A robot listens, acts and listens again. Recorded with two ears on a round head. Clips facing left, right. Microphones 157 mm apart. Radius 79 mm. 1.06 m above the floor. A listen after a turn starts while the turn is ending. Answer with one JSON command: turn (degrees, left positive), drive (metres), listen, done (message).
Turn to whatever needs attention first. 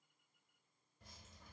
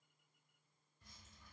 {"listen": true}
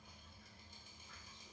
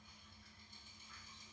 {"listen": true}
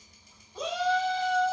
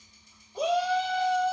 {"turn": -30}
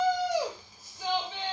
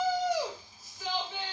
{"turn": 20}
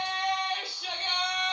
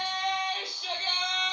{"done": "Facing the shout, 1 to 2 m away."}